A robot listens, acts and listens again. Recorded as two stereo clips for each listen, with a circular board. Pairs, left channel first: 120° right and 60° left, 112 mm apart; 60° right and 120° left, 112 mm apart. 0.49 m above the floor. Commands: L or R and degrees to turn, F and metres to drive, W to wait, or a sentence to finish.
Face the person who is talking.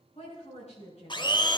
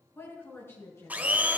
R130
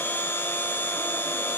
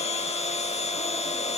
W
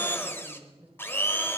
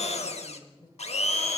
R15
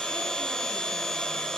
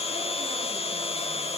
W
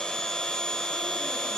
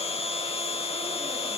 W
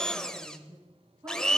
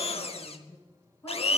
Facing the woman speaking, over 4 m away.